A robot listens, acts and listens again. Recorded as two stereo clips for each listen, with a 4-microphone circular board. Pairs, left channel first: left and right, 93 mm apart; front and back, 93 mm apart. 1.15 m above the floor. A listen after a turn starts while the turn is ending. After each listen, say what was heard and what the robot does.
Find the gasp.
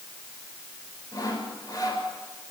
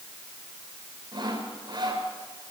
Keep listening.
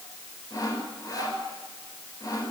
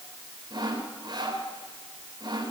Keep listening.
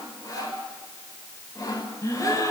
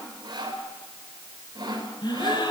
The gasp: 35° left. Turn 35° left.
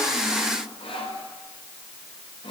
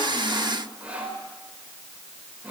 Facing where the gasp came from. I can't hear it now.